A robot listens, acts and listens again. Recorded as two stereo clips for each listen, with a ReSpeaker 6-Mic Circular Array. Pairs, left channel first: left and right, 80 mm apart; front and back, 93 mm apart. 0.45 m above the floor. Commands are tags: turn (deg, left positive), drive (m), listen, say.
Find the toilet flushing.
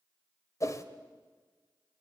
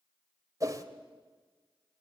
<listen/>
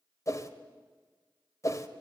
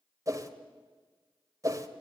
<listen/>
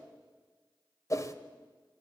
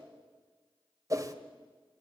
<say>I can't make out a toilet flushing to turn to.</say>